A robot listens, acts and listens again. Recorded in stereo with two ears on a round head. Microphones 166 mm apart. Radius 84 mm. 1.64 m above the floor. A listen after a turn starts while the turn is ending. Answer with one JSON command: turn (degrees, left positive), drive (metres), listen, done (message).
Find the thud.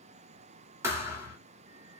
{"turn": -30}
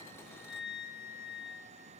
{"listen": true}
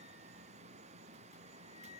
{"done": "I heard a thud, but can't make it out now. It was about 15° left or 135° right."}